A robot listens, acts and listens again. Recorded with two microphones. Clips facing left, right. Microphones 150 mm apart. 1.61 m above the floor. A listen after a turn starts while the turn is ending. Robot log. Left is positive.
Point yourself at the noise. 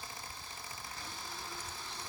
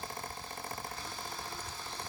cmd idle
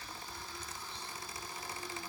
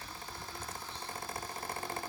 cmd idle
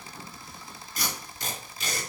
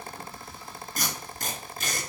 note: The tape being pulled: about 50° right or 130° right.
cmd yaw -50
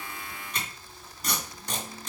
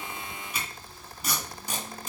end: Facing the tape being pulled, 2 to 4 m away.